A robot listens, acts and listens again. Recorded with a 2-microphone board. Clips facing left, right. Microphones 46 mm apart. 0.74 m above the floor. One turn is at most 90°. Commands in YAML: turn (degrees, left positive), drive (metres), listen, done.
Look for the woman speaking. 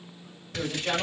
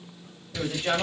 turn: -35
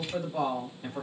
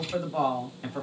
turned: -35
turn: -90
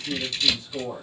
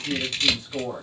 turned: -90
turn: -45
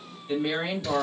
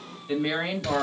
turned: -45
turn: -20
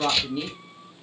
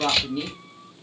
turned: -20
done: "Facing the woman speaking."